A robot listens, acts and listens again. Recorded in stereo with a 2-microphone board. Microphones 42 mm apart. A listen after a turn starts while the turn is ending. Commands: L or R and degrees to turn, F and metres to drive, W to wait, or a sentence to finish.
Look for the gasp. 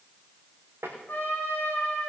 W
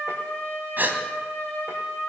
R50
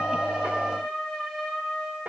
W
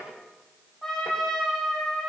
I heard a gasp, but can't make it out now. It was about straight ahead or 80° right.